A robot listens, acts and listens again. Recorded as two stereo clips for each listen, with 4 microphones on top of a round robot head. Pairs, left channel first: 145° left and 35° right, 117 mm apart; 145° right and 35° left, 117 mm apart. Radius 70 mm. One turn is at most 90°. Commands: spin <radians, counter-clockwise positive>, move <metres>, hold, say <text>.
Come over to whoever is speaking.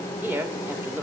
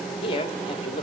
spin -1.57
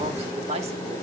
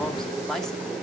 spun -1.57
spin -1.05
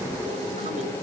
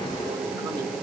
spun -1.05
hold
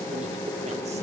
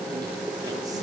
hold
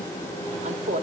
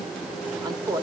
spin -0.35
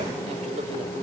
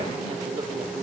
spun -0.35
hold
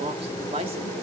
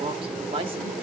move 1.0
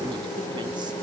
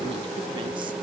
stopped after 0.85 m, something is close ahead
hold
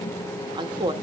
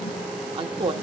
say Arrived at the woman speaking, straight ahead.